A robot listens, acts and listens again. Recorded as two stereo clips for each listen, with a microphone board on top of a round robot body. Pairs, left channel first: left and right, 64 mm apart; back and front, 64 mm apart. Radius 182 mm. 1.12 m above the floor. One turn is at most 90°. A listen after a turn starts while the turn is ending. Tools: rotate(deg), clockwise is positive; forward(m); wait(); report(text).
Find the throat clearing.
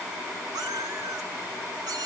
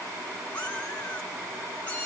wait()
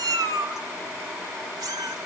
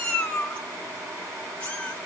wait()
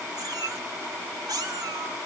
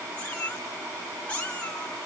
report("I can't make out throat clearing to turn to.")